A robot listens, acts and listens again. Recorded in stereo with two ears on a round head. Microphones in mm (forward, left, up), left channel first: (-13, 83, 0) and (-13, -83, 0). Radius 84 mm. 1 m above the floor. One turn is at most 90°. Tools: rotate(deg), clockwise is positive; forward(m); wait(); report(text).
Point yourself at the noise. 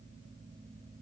wait()
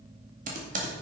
rotate(45)
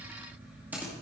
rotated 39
rotate(10)
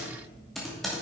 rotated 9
report("Facing the typing on a keyboard, 2 to 4 m away.")